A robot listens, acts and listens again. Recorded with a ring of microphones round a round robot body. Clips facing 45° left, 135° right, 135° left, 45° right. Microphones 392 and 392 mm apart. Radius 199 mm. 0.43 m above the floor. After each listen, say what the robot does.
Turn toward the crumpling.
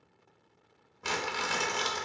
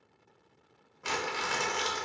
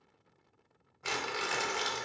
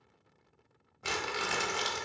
Facing the crumpling, under 1 m away.